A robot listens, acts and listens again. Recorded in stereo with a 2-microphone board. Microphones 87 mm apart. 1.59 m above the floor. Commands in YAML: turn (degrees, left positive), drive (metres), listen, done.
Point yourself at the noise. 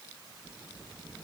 listen: true
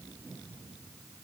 listen: true
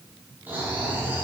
turn: -20
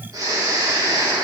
turn: -135
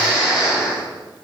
turn: -10
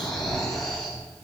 done: "Found it: snoring, straight ahead, over 4 m away."